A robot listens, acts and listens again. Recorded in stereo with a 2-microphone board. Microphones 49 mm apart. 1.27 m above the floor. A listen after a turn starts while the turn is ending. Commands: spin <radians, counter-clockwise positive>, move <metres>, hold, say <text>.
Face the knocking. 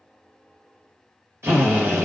hold
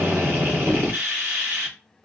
spin -0.96
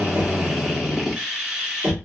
spin -1.22
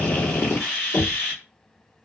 spin 0.44
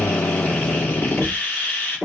spin -0.17
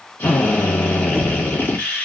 hold
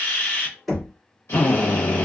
say Facing the knocking.